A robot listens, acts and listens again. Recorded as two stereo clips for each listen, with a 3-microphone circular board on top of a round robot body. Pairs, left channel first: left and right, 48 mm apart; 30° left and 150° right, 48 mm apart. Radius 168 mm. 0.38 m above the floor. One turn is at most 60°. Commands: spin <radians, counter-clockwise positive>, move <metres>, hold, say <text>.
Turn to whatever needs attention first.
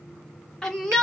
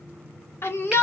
spin 0.17
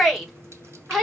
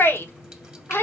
say Facing the shout.